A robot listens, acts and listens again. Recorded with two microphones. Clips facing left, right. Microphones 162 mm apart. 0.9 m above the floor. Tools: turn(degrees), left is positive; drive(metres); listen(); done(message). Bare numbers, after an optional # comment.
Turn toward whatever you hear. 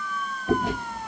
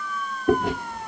# The chewing: about 55° right or 125° right.
turn(-55)
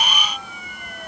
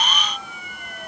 listen()
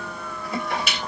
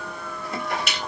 done("Found it: chewing, straight ahead, 2 to 4 m away.")